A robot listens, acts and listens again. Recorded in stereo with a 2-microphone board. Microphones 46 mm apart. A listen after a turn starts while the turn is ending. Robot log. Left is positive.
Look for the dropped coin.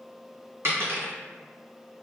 note: The dropped coin: about 60° right or 120° right.
cmd yaw -60
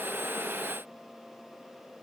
cmd idle
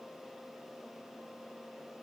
end: I heard a dropped coin, but can't make it out now. It was about straight ahead or 60° right.